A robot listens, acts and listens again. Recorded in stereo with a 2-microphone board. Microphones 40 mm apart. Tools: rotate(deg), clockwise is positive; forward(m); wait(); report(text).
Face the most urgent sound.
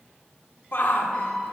rotate(-60)
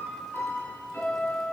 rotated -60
wait()
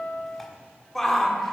rotate(-10)
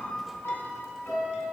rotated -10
wait()
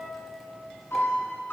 wait()
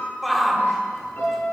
report("Found it: a shout, straight ahead, 1 to 2 m away.")